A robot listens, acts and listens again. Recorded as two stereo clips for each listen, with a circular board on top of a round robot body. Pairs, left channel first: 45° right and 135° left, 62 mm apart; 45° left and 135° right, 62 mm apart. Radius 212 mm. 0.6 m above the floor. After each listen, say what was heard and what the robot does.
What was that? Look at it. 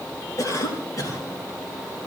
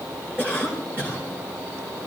The cough: 80° right. Turn 80° right.
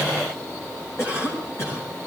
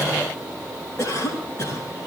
Facing the cough.